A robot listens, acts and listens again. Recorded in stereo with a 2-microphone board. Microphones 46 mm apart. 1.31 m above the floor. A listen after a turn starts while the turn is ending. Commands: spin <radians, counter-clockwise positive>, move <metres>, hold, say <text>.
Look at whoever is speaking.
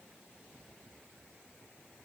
hold
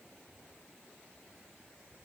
hold
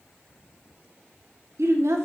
spin -1.57
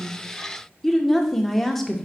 say Facing the woman speaking.